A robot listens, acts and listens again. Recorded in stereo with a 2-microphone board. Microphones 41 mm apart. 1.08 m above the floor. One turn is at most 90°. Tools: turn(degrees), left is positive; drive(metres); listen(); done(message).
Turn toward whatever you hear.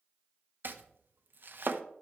turn(degrees=-60)
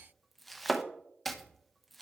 done("Facing the chopping, under 1 m away.")